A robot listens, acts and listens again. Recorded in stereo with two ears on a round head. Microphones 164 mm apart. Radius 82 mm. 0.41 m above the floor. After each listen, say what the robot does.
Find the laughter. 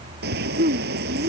Turn 45° right.
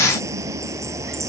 Keep listening.
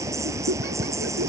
Turn 115° right.
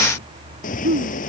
Turn 50° right.
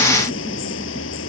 Keep listening.
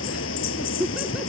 Found it: laughter, straight ahead.